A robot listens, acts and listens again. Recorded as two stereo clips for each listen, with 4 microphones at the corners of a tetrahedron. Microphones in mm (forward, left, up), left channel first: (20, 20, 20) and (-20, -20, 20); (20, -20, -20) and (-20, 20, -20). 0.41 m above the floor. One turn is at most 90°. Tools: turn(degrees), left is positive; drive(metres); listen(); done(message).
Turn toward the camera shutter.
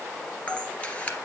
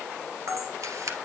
turn(degrees=90)
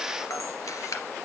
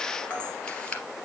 turn(degrees=25)
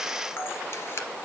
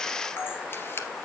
done("Found it: a camera shutter, straight ahead, 2 to 4 m away.")